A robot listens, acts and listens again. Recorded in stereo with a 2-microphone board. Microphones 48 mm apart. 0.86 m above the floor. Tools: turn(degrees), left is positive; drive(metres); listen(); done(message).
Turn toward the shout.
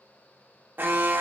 listen()
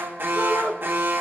turn(degrees=15)
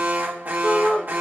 turn(degrees=150)
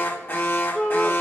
turn(degrees=35)
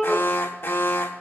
turn(degrees=10)
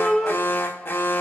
done("Facing the shout.")